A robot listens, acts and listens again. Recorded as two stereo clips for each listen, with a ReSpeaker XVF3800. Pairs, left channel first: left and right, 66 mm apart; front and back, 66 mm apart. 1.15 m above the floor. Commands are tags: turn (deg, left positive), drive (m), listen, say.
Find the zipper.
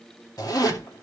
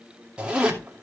<turn deg="105"/>
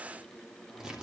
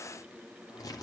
<turn deg="-10"/>
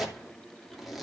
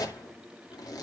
<say>Found it: a zipper, straight ahead, 2 to 4 m away.</say>